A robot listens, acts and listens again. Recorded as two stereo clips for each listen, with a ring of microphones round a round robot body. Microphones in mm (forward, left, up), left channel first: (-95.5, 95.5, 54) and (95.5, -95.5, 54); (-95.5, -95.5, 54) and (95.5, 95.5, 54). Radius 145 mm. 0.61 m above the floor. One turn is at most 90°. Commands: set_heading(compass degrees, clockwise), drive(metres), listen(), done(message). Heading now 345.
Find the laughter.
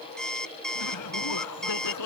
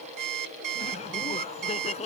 set_heading(255)
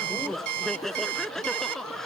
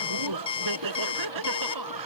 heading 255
set_heading(210)
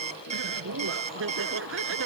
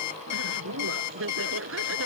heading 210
done("Found it: laughter, straight ahead.")